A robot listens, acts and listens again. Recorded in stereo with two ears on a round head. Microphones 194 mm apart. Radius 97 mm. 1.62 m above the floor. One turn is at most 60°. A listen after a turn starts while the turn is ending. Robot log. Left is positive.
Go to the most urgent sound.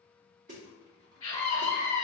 cmd yaw +30
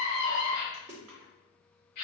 note: So it is at 135° left.
cmd yaw +60
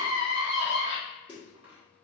note: The scream is now 70° left.
cmd yaw +60
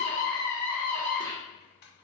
cmd fwd 1.0
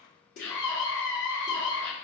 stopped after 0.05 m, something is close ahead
note: The scream is now 10° left.
cmd yaw +10
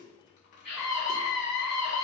end: Blocked. The scream is further on, straight ahead.